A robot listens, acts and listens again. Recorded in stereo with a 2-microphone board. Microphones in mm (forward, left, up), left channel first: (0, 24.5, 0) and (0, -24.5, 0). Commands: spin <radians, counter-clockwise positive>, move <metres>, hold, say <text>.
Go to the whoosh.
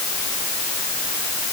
hold
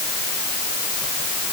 hold
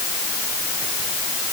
say I can't make out a whoosh.